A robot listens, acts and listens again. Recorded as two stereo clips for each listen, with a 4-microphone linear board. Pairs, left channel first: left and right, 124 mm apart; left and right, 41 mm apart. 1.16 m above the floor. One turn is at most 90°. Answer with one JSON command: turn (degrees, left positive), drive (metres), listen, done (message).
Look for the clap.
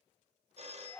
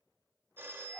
{"listen": true}
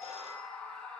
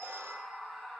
{"listen": true}
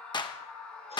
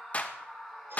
{"turn": 35}
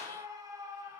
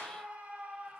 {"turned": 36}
{"listen": true}
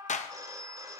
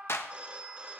{"turn": 90}
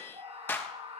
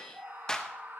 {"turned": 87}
{"turn": 15}
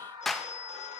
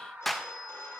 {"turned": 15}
{"done": "Facing the clap, 1 to 2 m away."}